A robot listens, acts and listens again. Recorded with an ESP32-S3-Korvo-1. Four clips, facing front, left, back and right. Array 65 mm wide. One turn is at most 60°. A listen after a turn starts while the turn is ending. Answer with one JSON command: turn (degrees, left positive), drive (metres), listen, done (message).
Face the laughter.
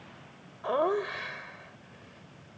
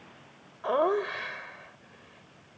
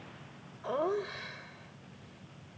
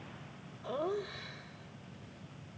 {"turn": 60}
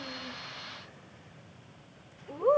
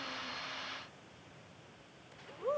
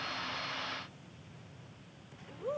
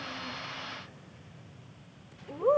{"turn": -35}
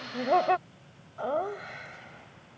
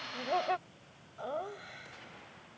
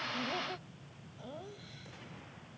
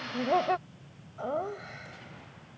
{"turn": -15}
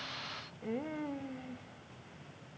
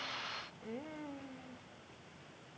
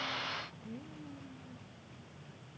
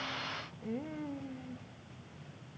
{"done": "Facing the laughter."}